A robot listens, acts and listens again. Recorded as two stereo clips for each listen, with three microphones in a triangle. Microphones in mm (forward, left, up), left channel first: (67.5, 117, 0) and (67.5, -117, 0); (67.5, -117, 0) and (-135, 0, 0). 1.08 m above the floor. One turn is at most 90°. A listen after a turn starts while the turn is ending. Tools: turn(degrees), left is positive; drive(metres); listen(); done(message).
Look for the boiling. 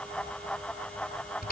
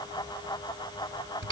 listen()
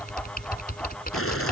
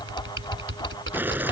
turn(degrees=70)
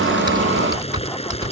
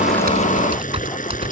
turn(degrees=25)
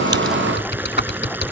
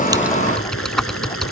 turn(degrees=-10)
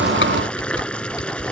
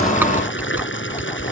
done("Found it: boiling, straight ahead.")